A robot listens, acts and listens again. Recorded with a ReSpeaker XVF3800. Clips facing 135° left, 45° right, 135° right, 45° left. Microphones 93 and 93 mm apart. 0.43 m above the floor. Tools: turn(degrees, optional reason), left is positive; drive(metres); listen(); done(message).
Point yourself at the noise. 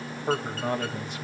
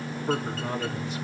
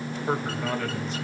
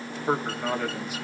turn(degrees=125, reason="The man speaking: 125° left.")
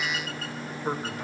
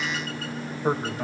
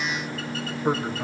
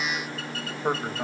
turn(degrees=-10, reason="The man speaking is now 10° right.")
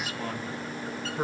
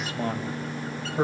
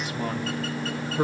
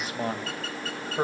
done("Found it: a man speaking, straight ahead.")